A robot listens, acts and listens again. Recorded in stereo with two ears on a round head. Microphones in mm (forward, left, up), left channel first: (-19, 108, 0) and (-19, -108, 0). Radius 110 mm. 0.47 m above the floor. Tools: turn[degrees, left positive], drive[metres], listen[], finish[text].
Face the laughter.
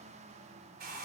Action: listen[]
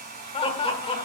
Thought: The laughter: about 25° left or 155° left.
Action: turn[25]
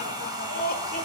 Thought: So it is at 125° left.
Action: turn[125]
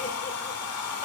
Thought: The laughter is now 35° left.
Action: turn[35]
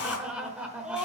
Action: finish[Found it: laughter, straight ahead, 1 to 2 m away.]